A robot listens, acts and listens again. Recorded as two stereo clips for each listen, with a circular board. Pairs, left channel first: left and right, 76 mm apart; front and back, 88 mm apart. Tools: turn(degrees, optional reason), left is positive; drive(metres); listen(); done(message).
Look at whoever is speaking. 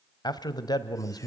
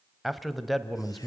turn(degrees=90, reason="The man speaking: 90° left.")
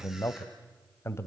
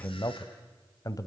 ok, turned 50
turn(degrees=40, reason="The man speaking is now 40° left.")
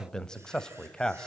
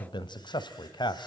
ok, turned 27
turn(degrees=10, reason="The man speaking is now 10° left.")
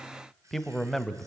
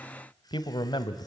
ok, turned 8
done("Facing the man speaking.")